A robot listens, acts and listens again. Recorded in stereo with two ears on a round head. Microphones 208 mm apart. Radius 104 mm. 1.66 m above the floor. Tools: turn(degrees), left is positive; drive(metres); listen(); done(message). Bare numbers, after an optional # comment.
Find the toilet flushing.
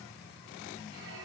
listen()
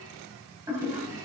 turn(-30)
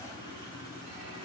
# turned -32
listen()
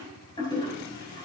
# So it is at 20° left.
turn(20)
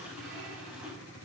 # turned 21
listen()
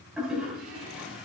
done("Found it: a toilet flushing, straight ahead.")